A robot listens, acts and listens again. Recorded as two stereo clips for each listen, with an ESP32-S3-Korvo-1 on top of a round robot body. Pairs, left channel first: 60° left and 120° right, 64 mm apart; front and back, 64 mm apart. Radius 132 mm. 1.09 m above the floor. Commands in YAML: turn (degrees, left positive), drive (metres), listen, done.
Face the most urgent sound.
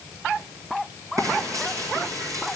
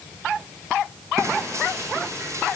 listen: true
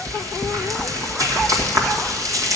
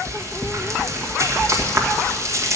listen: true
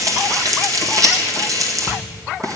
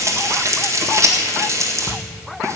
done: "I can't make out anything urgent, only frying."